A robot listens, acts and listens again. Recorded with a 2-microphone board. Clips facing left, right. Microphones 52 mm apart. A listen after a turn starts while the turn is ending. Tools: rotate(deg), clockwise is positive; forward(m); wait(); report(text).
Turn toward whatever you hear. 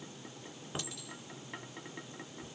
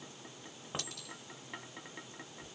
rotate(60)
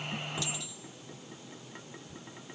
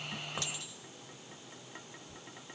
rotate(50)
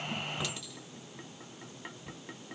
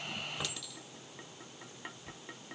rotate(-10)
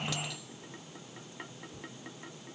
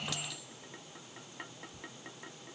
report("Found it: a clink, straight ahead, 2 to 4 m away.")